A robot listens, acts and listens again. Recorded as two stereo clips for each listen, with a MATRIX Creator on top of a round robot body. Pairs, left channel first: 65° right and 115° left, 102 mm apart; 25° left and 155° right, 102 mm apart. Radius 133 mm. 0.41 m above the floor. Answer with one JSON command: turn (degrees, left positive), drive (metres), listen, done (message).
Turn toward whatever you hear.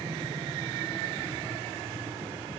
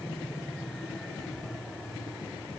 {"listen": true}
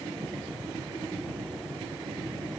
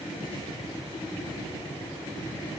{"listen": true}
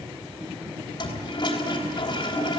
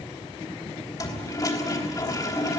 {"turn": -30}
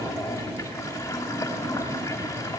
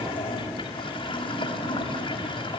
{"done": "Found it: a toilet flushing, straight ahead."}